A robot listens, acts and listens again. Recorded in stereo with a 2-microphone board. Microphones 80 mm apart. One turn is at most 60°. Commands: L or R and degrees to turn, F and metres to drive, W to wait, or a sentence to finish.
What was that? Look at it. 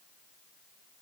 W
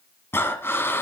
L30
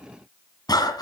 L60
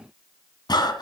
L60
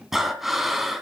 Found it: breathing, straight ahead.